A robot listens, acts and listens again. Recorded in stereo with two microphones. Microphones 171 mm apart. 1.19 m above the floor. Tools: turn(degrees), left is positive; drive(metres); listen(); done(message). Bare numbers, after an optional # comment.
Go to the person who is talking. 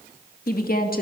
# The woman speaking: about 60° left or 120° left.
turn(60)
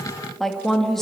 drive(1.0)
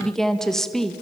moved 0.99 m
drive(1.0)
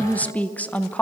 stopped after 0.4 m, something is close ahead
# The woman speaking is now 10° left.
turn(10)
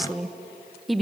done("I am next to the woman speaking.")